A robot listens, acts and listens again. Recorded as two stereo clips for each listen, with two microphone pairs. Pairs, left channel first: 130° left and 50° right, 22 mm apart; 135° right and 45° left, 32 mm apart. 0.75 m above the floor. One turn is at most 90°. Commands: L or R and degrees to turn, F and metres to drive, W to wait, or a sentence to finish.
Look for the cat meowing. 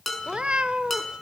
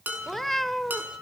R55
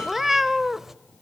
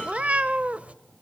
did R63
L10
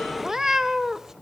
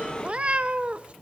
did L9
Found it: a cat meowing, straight ahead, under 1 m away.